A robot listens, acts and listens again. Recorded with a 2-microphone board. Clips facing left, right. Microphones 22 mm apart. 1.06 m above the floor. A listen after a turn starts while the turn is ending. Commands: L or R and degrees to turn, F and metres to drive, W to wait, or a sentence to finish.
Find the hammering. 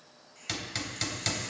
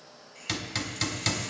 R30
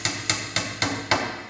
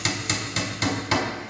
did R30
L25
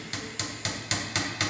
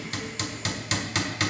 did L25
Facing the hammering, 1 to 2 m away.